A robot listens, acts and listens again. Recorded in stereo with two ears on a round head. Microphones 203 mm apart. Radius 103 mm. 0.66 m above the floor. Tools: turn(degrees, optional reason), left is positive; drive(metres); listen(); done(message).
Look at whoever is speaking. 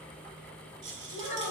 turn(degrees=35, reason="The child speaking: about 35° left or 145° left.")
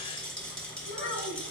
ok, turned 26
turn(degrees=120, reason="So it is at 120° left.")
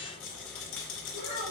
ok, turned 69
turn(degrees=50, reason="The child speaking is now 50° left.")
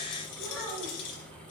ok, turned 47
done("Facing the child speaking.")